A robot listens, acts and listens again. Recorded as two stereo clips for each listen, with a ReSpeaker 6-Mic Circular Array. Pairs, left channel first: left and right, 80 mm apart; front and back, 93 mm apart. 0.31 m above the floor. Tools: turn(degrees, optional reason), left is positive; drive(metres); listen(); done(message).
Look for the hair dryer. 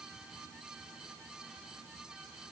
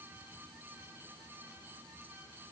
listen()
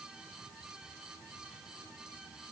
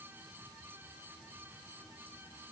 listen()
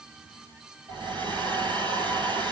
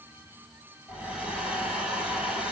turn(degrees=-100, reason="The hair dryer: 100° right.")
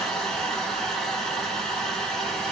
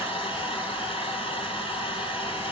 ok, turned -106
done("Found it: a hair dryer, straight ahead.")